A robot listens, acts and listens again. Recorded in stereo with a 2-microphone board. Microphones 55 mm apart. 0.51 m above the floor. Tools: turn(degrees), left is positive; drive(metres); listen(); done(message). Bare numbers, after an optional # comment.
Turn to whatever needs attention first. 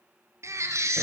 # The baby crying: about 70° right or 110° right.
turn(-70)
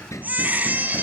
# So it is at 35° right.
turn(-35)
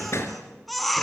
done("Facing the baby crying.")